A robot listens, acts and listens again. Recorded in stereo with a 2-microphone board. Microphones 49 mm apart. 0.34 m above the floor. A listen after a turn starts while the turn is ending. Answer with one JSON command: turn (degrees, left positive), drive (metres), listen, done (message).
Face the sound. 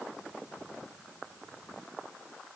{"listen": true}
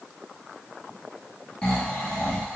{"turn": 20}
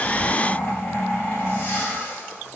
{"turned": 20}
{"turn": 140}
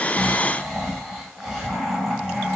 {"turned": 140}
{"turn": -10}
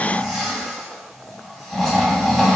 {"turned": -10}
{"done": "Found it: snoring, straight ahead, 1 to 2 m away."}